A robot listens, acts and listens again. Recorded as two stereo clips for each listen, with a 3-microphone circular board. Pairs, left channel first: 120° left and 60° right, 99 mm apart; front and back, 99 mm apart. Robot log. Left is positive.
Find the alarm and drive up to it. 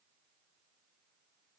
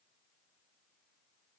cmd idle
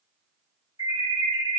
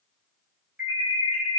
note: The alarm: 105° left.
cmd yaw +105
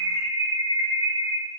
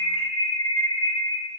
cmd fwd 1.0
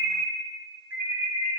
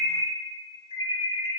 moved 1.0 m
note: The alarm is now 10° left.
cmd yaw +10
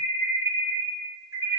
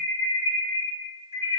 cmd fwd 1.0
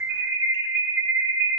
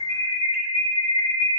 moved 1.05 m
cmd fwd 1.0
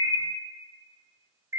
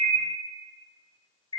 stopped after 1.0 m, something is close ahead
end: Arrived at the alarm, straight ahead.